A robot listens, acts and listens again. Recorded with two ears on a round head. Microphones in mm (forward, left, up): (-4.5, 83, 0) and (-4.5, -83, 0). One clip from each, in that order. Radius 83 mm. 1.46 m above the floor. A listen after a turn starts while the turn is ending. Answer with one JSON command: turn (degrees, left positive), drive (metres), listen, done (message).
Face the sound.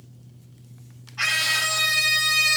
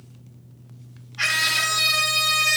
{"turn": 35}
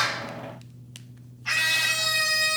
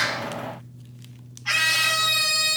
{"done": "Facing the scream."}